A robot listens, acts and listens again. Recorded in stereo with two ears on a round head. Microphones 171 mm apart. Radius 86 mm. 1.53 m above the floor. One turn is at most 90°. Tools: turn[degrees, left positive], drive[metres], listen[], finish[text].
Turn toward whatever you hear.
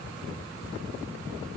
Action: listen[]
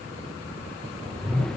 Action: turn[30]
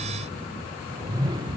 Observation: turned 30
Thought: So it is at 25° right.
Action: turn[-25]
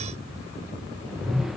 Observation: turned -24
Action: finish[Facing the whoosh.]